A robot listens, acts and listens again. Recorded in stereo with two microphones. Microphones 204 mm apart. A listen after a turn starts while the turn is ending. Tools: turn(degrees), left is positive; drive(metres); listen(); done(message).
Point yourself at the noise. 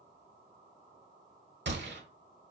turn(degrees=-60)
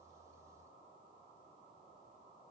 listen()
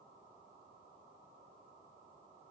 done("I heard a gunshot, but can't make it out now. It was about straight ahead or 60° right.")